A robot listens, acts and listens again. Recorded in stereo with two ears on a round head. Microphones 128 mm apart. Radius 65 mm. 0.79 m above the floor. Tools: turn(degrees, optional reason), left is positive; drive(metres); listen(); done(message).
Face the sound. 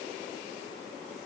listen()
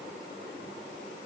listen()
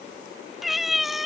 turn(degrees=30)
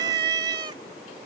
turn(degrees=-30, reason="So it is at 30° right.")
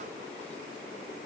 listen()
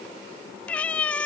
turn(degrees=10, reason="The cat meowing is now 10° left.")
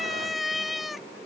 done("Found it: a cat meowing, straight ahead.")